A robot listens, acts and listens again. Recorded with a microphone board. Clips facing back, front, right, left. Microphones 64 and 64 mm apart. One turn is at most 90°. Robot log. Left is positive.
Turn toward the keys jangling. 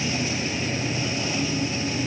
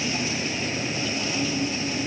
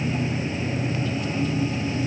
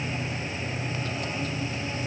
cmd idle
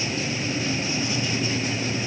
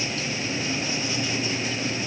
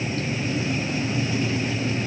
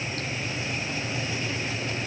cmd idle
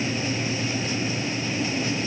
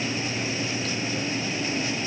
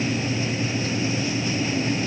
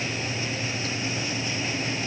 end: I can't make out keys jangling.